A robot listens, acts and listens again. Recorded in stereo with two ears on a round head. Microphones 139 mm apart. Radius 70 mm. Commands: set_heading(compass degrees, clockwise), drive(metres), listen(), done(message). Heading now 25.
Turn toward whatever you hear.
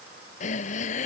set_heading(335)
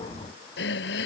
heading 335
set_heading(255)
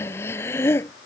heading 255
set_heading(240)
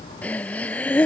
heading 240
set_heading(230)
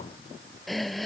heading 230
done("Found it: breathing, straight ahead.")